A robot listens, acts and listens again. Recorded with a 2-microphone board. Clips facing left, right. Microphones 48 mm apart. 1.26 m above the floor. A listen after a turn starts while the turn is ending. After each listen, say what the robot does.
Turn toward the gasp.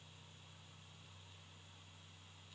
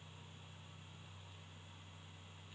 Keep listening.
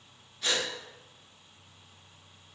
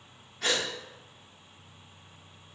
Turn 90° right.
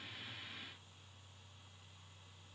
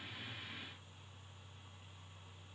Facing where the gasp came from. I can't hear it now.